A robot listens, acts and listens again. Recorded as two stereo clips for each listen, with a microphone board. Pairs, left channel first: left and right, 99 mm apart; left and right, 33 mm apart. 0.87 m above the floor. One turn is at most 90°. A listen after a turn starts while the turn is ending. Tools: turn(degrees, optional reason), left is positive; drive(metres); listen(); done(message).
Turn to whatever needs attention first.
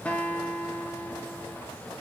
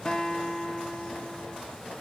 listen()
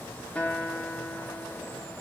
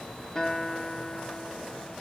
listen()
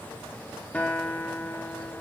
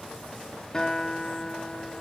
done("I can't make out anything urgent, only a guitar.")